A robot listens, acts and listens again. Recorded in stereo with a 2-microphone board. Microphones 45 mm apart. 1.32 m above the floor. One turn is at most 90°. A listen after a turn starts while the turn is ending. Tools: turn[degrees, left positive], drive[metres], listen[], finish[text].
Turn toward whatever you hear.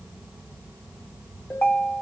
Thought: The ringtone: about 55° left or 125° left.
Action: turn[55]
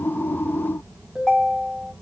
Action: finish[Found it: a ringtone, straight ahead, 1 to 2 m away.]